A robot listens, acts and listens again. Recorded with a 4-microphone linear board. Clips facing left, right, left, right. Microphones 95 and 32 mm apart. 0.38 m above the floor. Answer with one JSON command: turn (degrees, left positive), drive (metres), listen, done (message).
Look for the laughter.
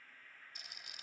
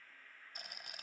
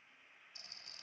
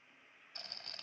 {"listen": true}
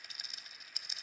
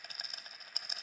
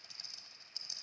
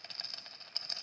{"listen": true}
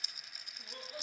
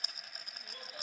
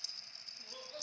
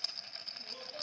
{"turn": 25}
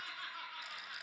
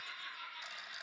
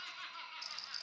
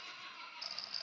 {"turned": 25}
{"turn": 125}
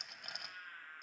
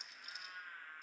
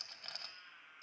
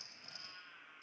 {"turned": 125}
{"done": "Facing the laughter, over 4 m away."}